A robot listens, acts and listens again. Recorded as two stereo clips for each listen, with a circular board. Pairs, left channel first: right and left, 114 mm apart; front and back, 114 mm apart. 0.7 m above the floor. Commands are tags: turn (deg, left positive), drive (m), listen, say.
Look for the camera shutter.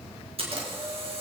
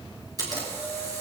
<turn deg="125"/>
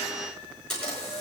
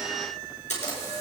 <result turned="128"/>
<say>Facing the camera shutter.</say>